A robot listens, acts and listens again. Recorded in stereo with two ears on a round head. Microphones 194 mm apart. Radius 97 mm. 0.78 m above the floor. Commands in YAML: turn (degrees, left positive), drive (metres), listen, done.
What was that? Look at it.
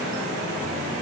listen: true
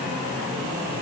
listen: true
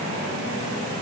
done: "I can't make out anything."